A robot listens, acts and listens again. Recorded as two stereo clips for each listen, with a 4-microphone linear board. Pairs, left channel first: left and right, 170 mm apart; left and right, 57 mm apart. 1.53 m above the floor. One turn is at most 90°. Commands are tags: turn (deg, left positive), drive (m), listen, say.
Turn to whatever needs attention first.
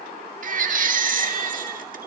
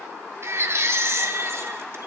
<turn deg="-50"/>
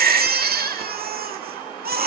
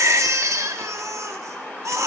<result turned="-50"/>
<turn deg="-75"/>
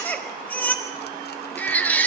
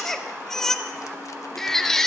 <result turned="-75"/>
<turn deg="10"/>
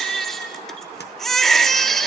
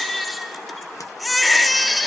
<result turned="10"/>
<say>Found it: a baby crying, straight ahead, 1 to 2 m away.</say>